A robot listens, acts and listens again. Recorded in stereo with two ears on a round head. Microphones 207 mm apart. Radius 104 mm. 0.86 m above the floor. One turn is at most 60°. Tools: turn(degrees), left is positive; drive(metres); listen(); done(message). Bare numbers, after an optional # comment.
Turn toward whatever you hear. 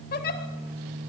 # The giggle: about 40° left or 140° left.
turn(40)
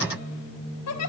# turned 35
# So it is at 100° left.
turn(60)
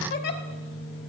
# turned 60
# The giggle is now 45° left.
turn(45)
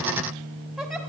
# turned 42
done("Facing the giggle, 1 to 2 m away.")